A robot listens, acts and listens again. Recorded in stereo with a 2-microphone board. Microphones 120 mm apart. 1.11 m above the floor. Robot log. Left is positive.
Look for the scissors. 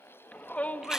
cmd idle
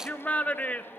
cmd idle
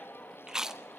end: I can't make out scissors to turn to.